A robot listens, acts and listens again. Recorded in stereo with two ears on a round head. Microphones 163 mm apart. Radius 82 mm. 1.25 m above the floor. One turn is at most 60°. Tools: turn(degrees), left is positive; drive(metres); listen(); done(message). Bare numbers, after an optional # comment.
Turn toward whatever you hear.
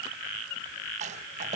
# The rattle: about 40° right or 140° right.
turn(-40)
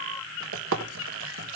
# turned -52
# So it is at 90° right.
turn(-60)
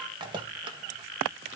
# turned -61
# The rattle is now 25° right.
turn(-25)
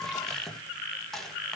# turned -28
done("Found it: a rattle, straight ahead.")